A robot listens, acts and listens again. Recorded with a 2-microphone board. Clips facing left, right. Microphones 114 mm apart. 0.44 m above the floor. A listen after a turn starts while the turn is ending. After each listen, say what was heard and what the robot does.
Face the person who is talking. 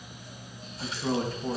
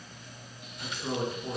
Turn 90° left.
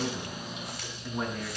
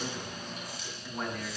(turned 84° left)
Found it: a man speaking, straight ahead.